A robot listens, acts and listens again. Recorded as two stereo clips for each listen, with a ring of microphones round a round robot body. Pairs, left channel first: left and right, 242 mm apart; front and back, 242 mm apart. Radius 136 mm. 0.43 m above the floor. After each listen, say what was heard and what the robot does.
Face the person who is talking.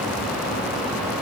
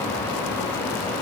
Keep listening.
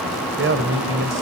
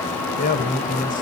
The man speaking: 60° right. Turn 60° right.
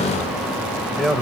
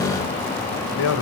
Found it: a man speaking, straight ahead, 2 to 4 m away.